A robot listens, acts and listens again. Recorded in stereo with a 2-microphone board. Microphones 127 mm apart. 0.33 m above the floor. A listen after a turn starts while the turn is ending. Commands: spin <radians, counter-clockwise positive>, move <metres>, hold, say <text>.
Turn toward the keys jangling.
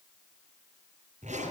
hold
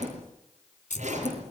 spin 1.31
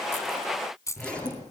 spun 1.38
spin 0.44
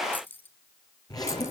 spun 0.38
spin 0.26
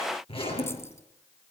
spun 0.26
hold
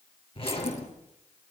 hold
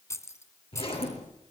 spin 0.44
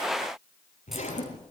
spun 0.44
hold
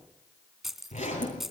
say Found it: keys jangling, straight ahead.